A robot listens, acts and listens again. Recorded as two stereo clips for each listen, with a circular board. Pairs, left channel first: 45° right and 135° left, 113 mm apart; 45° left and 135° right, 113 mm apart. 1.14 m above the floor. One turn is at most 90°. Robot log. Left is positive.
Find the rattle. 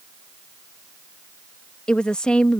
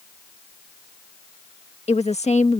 cmd idle
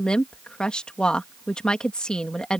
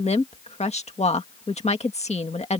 cmd idle
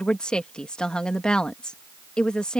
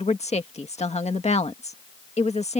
end: I can't make out a rattle to turn to.